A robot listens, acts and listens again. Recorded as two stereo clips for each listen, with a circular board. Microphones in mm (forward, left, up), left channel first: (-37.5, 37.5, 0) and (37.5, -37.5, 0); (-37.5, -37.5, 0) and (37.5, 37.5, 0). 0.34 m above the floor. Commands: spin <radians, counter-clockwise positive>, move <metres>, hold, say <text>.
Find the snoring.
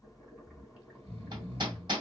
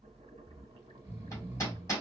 spin -0.44
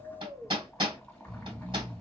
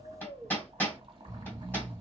spin -0.17
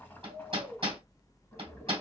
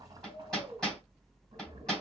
say Facing the snoring.